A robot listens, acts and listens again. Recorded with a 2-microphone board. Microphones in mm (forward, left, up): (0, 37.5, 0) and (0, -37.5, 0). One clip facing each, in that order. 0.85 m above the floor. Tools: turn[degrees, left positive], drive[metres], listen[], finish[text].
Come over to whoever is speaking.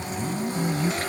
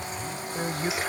Thought: The woman speaking: about 50° right or 130° right.
Action: turn[-50]
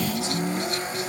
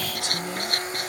Action: listen[]
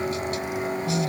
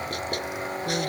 Thought: So it is at 75° right.
Action: turn[-75]
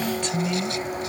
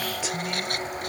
Action: drive[1.0]
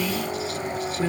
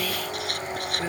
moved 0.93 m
Thought: The woman speaking is now 15° right.
Action: turn[-15]
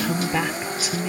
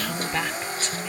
Action: drive[1.0]
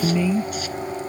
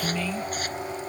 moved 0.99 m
Thought: The woman speaking is now 15° left.
Action: turn[15]
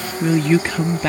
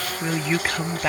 Action: drive[1.0]
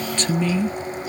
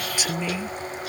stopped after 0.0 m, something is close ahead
Thought: The woman speaking is now 10° right.
Action: turn[-10]
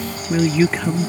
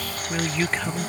Action: finish[I am next to the woman speaking.]